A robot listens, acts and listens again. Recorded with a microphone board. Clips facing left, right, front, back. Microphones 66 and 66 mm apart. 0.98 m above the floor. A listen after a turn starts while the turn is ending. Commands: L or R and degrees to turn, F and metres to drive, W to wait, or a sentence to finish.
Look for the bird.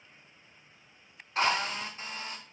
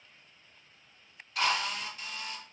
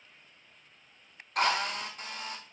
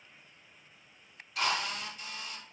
W
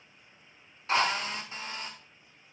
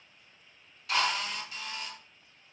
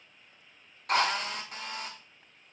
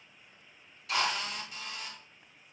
W
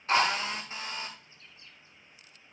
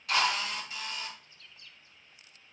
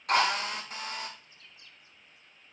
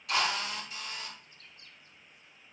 L150
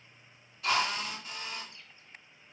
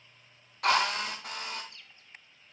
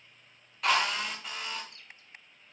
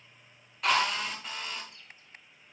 L25
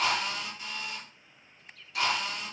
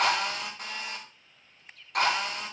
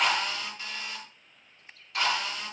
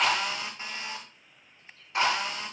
Facing the bird.